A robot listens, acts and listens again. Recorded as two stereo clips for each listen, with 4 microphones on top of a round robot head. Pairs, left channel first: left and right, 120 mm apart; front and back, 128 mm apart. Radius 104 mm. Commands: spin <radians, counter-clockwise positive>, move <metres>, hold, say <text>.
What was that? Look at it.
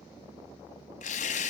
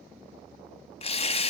spin 0.79
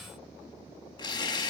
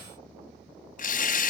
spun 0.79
spin 0.44
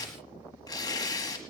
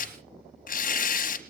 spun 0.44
spin 0.35
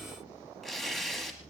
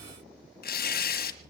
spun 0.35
say Found it: tearing paper, straight ahead, 1 to 2 m away.